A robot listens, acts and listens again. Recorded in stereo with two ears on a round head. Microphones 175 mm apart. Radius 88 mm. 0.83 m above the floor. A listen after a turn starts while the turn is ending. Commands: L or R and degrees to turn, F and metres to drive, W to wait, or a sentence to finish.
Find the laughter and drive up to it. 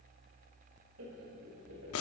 R90
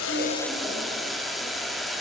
W
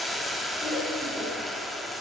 F1.0
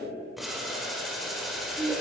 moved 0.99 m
F1.0
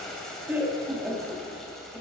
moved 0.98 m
R10
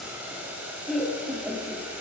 F1.0
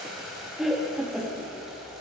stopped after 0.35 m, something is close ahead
I am next to the laughter.